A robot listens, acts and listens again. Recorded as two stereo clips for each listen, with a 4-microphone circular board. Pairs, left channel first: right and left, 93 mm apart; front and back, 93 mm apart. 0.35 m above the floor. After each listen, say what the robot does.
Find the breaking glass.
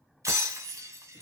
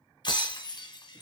Turn 35° left.
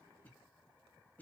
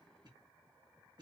Facing where the breaking glass came from. I can't hear it now.